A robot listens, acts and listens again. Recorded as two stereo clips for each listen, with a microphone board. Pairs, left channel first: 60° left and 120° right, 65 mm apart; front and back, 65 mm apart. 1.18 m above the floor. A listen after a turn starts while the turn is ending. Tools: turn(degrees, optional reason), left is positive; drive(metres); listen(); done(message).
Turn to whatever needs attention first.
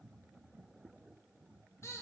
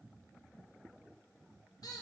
listen()
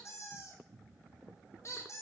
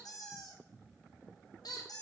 listen()
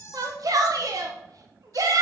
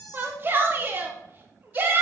turn(degrees=-125, reason="The shout: 125° right.")
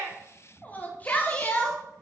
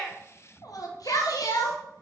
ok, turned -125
done("Found it: a shout, straight ahead, under 1 m away.")